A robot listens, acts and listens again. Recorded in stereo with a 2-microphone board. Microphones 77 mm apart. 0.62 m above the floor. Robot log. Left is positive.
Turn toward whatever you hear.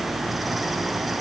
cmd idle
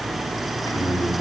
cmd yaw +90
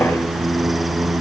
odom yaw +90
end: Facing the singing.